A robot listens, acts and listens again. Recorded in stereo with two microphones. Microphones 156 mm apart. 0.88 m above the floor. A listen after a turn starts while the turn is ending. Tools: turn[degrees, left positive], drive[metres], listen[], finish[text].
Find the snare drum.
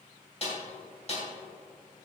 Thought: The snare drum: about 45° left or 135° left.
Action: turn[45]
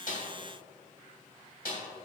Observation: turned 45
Thought: So it is at 90° left.
Action: turn[90]
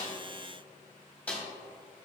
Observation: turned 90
Thought: The snare drum is now 10° left.
Action: turn[10]
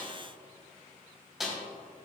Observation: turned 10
Action: finish[Found it: a snare drum, straight ahead, 2 to 4 m away.]